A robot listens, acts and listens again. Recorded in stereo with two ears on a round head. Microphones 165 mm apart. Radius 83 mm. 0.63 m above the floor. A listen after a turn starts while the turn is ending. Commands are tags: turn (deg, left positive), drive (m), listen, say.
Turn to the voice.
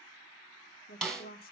<turn deg="50"/>
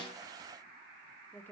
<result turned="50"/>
<turn deg="10"/>
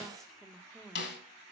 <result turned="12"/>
<say>Found it: a woman speaking, straight ahead, 1 to 2 m away.</say>